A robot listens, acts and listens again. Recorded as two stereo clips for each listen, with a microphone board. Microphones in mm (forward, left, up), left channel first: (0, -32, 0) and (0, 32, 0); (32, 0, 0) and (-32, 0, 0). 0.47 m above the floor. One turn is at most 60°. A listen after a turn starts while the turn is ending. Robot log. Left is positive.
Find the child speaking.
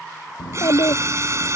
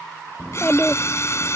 note: The child speaking: 70° right.
cmd yaw -60
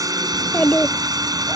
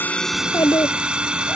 note: The child speaking is now 15° right.
cmd yaw -15
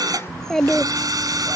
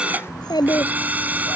note: The child speaking is now 10° right.
cmd yaw -10
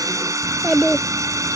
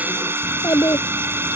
end: Found it: a child speaking, straight ahead.